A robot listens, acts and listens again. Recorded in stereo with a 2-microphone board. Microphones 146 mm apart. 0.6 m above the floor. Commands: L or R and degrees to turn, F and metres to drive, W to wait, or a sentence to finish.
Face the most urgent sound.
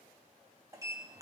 W
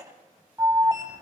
R20
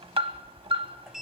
R135
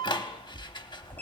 L35
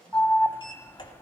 L20
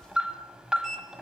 Found it: an alarm, straight ahead, under 1 m away.